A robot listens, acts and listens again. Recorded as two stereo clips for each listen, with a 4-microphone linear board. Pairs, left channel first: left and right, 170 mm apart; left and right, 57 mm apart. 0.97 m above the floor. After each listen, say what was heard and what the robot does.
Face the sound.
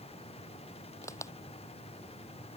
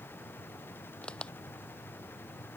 The crack: about 20° left or 160° left. Turn 20° left.
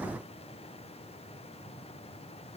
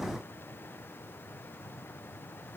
Keep listening.
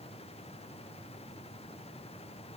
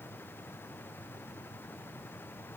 I heard a crack, but can't make it out now. It was about straight ahead or 140° left.